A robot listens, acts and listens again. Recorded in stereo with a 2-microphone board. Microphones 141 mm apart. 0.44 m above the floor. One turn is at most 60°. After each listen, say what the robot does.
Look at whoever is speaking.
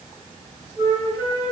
Keep listening.
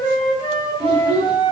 Turn 40° right.
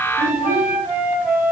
Keep listening.
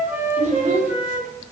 Turn 60° right.
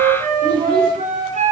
Turn 30° right.
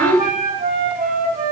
Facing the child speaking.